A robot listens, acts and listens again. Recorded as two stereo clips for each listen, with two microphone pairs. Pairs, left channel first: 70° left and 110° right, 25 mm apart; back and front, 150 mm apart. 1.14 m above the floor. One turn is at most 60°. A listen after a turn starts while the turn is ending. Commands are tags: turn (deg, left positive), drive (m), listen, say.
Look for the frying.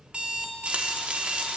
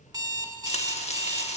<turn deg="-60"/>
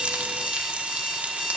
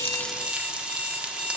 <turn deg="-60"/>
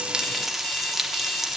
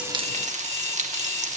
<turn deg="-35"/>
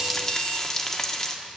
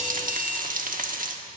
<say>Found it: frying, straight ahead.</say>